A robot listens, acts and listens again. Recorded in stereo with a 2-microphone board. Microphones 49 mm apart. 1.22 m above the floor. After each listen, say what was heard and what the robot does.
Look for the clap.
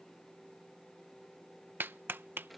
The clap: about 50° right or 130° right. Turn 50° right.
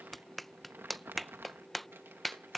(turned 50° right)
Found it: a clap, straight ahead.